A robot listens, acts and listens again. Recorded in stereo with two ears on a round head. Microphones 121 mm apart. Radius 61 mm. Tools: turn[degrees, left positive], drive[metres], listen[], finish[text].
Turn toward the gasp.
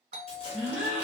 Action: turn[-30]
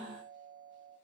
Thought: So it is at 145° right.
Action: turn[-145]
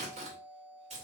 Action: finish[I heard a gasp from this way, but can't make it out now.]